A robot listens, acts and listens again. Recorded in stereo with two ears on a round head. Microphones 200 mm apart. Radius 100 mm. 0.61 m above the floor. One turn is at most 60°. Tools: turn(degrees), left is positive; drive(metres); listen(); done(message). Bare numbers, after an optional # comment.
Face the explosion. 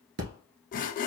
# The explosion: about 65° right or 115° right.
turn(-60)
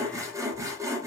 listen()
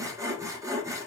done("I heard an explosion, but can't make it out now. It was about 5° right or 55° right.")